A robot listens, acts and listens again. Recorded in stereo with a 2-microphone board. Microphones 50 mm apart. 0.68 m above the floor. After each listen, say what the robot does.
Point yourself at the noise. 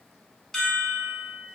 Turn 30° left.
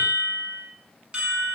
Turn 20° right.
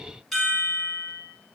Facing the chime.